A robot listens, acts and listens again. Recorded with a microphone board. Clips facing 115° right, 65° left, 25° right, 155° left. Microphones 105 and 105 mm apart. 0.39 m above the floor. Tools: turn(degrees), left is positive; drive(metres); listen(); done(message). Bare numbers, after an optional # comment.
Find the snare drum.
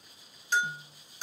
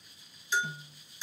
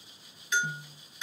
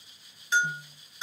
# The snare drum: 70° right.
turn(-70)
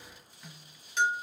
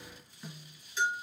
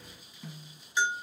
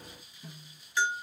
# The snare drum is now 15° right.
turn(-15)
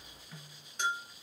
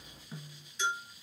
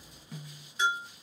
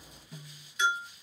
done("Facing the snare drum.")